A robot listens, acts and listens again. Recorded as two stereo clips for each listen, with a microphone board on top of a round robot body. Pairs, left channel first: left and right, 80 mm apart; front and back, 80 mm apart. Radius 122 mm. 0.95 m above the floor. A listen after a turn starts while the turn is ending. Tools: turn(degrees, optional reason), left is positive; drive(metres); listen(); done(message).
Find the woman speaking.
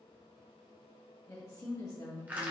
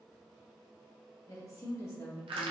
turn(degrees=40, reason="The woman speaking: 40° left.")
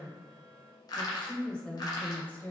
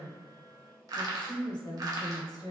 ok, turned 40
turn(degrees=30, reason="The woman speaking is now 30° left.")
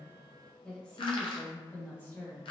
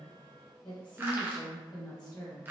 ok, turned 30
turn(degrees=40, reason="The woman speaking is now 40° left.")
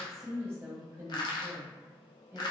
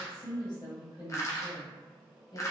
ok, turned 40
turn(degrees=-15, reason="The woman speaking is now 15° right.")
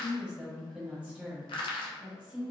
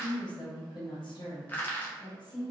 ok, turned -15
done("Facing the woman speaking.")